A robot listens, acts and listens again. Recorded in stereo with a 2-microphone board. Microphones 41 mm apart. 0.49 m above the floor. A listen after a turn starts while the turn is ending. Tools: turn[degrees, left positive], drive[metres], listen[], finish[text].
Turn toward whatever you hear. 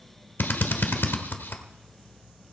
Thought: The drill: about 60° left or 120° left.
Action: turn[60]
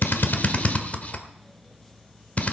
Thought: So it is at 45° left.
Action: turn[45]
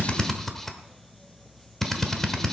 Thought: The drill is now 10° left.
Action: turn[10]
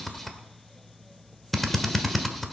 Action: finish[Found it: a drill, straight ahead.]